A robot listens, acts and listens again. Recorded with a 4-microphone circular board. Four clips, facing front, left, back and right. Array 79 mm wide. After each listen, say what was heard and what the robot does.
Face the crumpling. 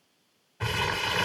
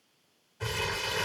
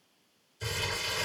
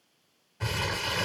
Found it: crumpling, straight ahead.